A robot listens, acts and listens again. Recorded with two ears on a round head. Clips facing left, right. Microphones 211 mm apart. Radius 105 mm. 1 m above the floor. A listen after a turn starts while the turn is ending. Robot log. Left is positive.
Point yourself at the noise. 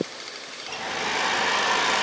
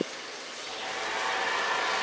note: The hair dryer: about 60° left or 120° left.
cmd yaw +60
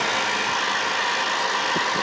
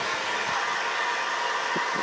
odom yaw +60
note: So it is at 55° left.
cmd yaw +55
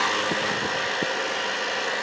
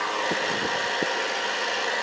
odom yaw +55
end: Found it: a hair dryer, straight ahead.